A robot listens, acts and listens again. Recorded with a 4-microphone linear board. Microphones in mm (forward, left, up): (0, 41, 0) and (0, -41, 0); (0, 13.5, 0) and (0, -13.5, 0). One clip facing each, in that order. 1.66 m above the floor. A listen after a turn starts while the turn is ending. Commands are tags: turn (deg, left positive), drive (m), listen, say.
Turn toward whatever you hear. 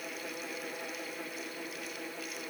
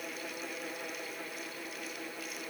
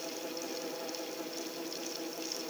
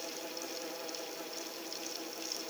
<listen/>
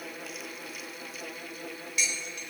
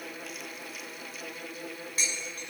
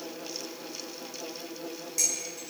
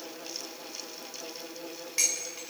<turn deg="-35"/>
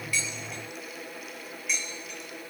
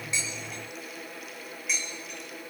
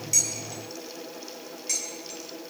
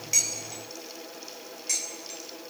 <say>Facing the dishes clattering, over 4 m away.</say>